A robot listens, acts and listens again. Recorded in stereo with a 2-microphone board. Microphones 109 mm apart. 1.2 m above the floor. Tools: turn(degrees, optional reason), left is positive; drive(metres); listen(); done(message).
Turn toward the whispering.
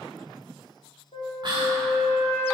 turn(degrees=-40, reason="The whispering: about 40° right or 140° right.")
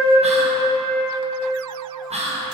turn(degrees=-100, reason="So it is at 100° right.")
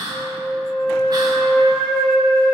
turn(degrees=-40, reason="The whispering is now 40° right.")
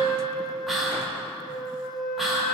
done("Facing the whispering.")